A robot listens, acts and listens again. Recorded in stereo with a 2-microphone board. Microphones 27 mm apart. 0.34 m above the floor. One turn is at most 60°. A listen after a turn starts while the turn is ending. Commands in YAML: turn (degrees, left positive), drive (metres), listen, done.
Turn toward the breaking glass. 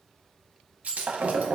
turn: -60
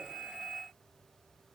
listen: true
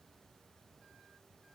done: "I heard breaking glass, but can't make it out now. It was about 10° right or 50° right."